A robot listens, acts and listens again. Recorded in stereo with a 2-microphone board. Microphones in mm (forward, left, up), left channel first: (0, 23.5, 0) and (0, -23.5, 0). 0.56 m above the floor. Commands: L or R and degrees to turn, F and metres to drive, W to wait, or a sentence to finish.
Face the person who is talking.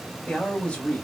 L25
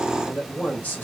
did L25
L130
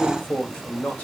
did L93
L40
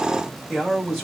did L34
Facing the man speaking.